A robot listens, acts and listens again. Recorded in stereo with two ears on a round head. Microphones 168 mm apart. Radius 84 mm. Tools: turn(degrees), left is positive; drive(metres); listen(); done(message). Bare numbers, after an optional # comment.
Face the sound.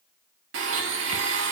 # The blender: about 70° right or 110° right.
turn(-70)
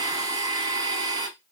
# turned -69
# So it is at 20° right.
turn(-20)
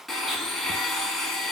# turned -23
done("Found it: a blender, straight ahead, under 1 m away.")